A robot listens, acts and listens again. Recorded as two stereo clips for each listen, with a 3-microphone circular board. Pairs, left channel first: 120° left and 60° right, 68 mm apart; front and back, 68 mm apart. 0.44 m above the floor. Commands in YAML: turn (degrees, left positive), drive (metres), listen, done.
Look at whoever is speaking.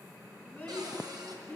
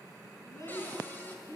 turn: 50
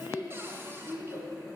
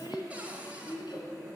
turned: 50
done: "Found it: a child speaking, straight ahead."